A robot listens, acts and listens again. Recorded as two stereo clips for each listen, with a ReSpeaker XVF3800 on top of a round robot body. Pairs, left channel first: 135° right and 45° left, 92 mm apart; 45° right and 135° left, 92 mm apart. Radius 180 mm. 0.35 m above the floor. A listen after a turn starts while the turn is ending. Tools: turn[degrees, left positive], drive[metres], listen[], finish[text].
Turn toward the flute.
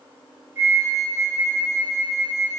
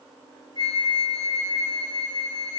Thought: The flute: 20° right.
Action: turn[-20]
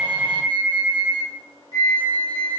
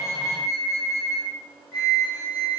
Action: finish[Facing the flute.]